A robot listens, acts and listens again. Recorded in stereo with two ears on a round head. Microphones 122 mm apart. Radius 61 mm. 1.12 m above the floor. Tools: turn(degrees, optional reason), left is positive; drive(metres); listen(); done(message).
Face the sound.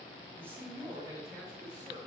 turn(degrees=-30, reason="The man speaking: about 30° right or 150° right.")
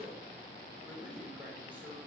turn(degrees=-10, reason="So it is at 10° right.")
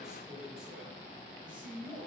turn(degrees=-10, reason="The man speaking is now 10° right.")
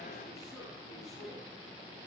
listen()
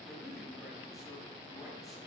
done("Found it: a man speaking, straight ahead, over 4 m away.")